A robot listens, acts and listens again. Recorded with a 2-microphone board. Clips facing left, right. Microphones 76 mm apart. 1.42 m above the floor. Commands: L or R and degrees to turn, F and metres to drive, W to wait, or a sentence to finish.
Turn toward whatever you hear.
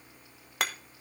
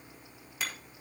L70
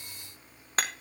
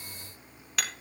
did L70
L40
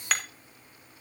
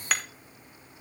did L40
Facing the hammering, 1 to 2 m away.